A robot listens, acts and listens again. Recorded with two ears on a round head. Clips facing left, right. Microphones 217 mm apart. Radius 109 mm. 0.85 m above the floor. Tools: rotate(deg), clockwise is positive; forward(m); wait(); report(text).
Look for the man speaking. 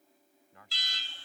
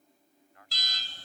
rotate(-75)
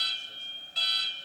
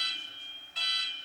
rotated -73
wait()
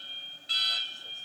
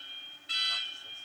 wait()
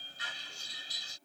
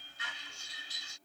report("I heard a man speaking, but can't make it out now. It was about straight ahead or 35° left.")